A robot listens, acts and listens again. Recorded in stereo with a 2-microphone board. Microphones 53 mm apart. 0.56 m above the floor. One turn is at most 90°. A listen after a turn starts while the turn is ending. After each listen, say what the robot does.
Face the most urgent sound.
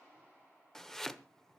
Keep listening.
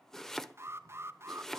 Turn 55° right.
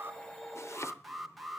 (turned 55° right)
Facing the alarm.